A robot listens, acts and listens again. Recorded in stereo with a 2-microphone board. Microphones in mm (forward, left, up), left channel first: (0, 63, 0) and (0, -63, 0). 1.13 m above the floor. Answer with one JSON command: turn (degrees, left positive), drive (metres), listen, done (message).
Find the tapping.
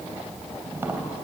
{"turn": -20}
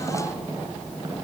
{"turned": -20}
{"turn": -140}
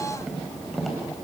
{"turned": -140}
{"done": "Found it: tapping, straight ahead."}